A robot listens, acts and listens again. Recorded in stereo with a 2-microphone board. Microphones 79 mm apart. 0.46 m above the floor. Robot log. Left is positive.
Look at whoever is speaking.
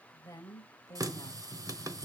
note: The woman speaking: about 45° left or 135° left.
cmd yaw +45
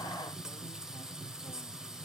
cmd idle
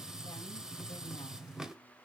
cmd idle
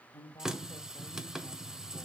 note: So it is at 85° left.
cmd yaw +85
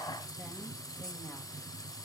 cmd idle
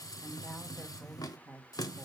note: The woman speaking is now 20° left.
cmd yaw +20
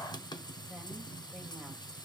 cmd idle
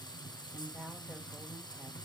end: Facing the woman speaking.